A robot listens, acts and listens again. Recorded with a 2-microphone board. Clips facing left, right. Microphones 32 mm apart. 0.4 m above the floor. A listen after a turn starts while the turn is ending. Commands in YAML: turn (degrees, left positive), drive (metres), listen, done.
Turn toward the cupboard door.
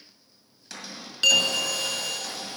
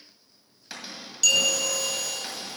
turn: -20
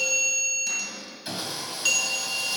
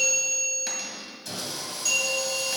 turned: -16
turn: -145
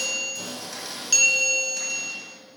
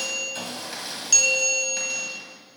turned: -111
turn: -35
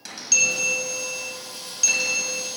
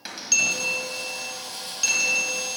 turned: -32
listen: true
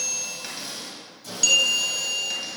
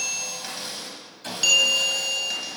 done: "Facing where the cupboard door came from. I can't hear it now."